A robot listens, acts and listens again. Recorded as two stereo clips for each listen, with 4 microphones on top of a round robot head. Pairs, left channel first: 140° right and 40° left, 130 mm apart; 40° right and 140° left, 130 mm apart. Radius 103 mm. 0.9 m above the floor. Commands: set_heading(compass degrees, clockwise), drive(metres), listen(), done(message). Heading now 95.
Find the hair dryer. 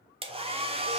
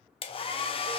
done("Facing the hair dryer, 1 to 2 m away.")